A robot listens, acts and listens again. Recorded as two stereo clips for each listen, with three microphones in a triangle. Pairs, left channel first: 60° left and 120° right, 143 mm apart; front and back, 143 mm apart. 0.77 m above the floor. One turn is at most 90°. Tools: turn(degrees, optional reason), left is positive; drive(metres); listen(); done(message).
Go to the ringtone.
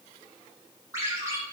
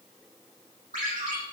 turn(degrees=90, reason="The ringtone: 170° left.")
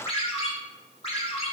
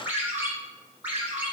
turn(degrees=90, reason="The ringtone is now 105° left.")
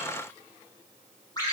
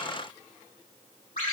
drive(metres=1.0)
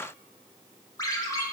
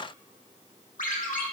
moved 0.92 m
drive(metres=1.0)
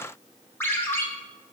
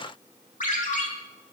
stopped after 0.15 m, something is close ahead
turn(degrees=-15, reason="The ringtone is now 15° right.")
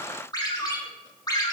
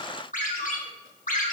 done("Arrived at the ringtone, straight ahead.")